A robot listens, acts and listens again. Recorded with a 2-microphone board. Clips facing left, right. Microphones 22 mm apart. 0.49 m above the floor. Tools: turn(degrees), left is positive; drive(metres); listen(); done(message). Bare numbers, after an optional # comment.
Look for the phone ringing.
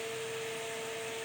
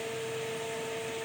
listen()
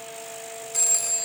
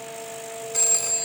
turn(-30)
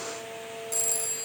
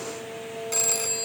# So it is at 145° right.
turn(-145)
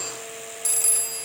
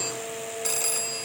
# The phone ringing is now 25° right.
turn(-25)
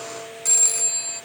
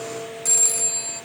done("Facing the phone ringing.")